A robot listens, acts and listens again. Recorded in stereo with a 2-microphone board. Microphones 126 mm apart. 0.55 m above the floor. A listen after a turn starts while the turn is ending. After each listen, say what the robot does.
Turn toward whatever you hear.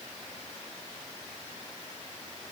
Keep listening.
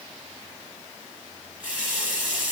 Turn 30° right.
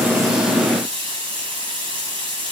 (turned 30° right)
Turn 140° right.
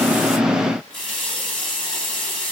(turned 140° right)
Facing the running tap.